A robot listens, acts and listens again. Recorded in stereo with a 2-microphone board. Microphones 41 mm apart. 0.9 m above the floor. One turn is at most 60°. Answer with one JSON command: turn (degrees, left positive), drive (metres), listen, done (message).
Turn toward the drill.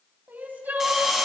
{"turn": -30}
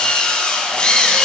{"turn": 25}
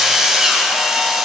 {"turn": -10}
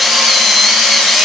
{"done": "Found it: a drill, straight ahead."}